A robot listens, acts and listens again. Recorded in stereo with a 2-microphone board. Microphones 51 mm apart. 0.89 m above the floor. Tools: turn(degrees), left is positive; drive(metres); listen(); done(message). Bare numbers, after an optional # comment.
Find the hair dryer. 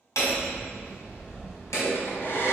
# The hair dryer: about 55° left or 125° left.
turn(55)
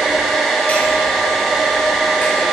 done("Found it: a hair dryer, straight ahead, 2 to 4 m away.")